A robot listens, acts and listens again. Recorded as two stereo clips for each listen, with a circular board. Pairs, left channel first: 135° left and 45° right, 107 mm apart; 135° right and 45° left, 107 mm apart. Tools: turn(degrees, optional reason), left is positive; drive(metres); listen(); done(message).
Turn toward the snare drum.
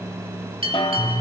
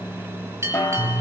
turn(degrees=160, reason="The snare drum: 160° left.")
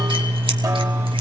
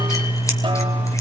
listen()
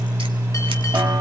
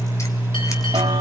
listen()
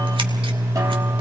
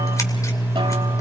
done("Facing where the snare drum came from. I can't hear it now.")